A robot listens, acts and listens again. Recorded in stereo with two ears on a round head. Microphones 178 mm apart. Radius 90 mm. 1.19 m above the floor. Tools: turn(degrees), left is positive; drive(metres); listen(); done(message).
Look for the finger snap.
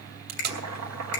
turn(degrees=55)
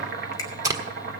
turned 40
listen()
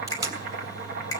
turn(degrees=15)
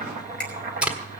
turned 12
done("Found it: a finger snap, straight ahead, 2 to 4 m away.")